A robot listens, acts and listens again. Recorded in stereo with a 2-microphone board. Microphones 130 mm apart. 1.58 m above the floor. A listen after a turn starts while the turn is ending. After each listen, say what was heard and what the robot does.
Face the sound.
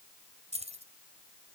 The keys jangling: about 55° right or 125° right. Turn 55° right.
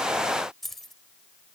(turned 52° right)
Facing the keys jangling.